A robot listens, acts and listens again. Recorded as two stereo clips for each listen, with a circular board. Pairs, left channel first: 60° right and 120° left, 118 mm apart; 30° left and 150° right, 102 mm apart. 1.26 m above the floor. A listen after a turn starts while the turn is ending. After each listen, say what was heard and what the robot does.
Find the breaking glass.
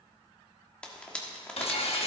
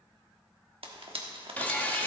The breaking glass: 40° right. Turn 40° right.
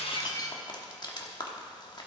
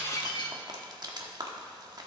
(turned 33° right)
The breaking glass is now 10° right. Turn 10° right.
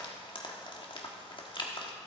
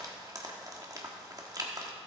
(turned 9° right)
Facing where the breaking glass came from. I can't hear it now.